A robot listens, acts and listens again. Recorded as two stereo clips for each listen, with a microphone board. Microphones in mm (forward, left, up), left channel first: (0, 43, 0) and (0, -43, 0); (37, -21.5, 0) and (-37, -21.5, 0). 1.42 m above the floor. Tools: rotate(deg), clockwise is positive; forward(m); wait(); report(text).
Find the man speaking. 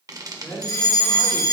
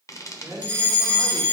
rotate(-150)
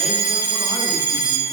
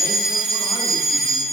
wait()
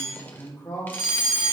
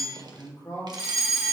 rotate(-30)
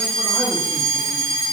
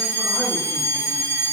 wait()
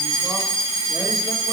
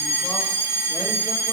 wait()
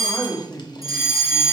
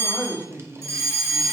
rotate(-10)
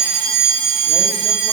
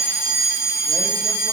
wait()
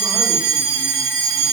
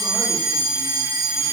wait()
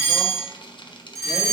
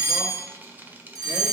report("I heard a man speaking from this way, but can't make it out now.")